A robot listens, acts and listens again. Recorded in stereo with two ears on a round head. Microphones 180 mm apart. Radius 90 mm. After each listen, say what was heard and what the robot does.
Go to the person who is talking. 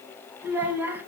Turn 30° right.
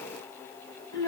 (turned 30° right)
So it is at 20° left. Turn 20° left.
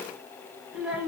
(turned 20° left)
Drive 1.0 m forward.
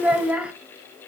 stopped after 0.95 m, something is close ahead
Arrived at the child speaking, straight ahead.